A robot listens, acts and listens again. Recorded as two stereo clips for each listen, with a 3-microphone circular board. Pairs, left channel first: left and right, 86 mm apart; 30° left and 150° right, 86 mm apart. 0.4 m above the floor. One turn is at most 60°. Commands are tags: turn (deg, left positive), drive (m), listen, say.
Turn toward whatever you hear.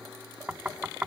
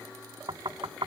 <turn deg="-60"/>
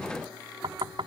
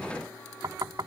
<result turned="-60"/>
<turn deg="-60"/>
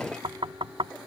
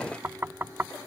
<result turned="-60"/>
<turn deg="-60"/>
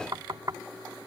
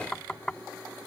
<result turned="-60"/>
<turn deg="-50"/>
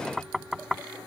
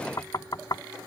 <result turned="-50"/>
<say>Found it: knocking, straight ahead.</say>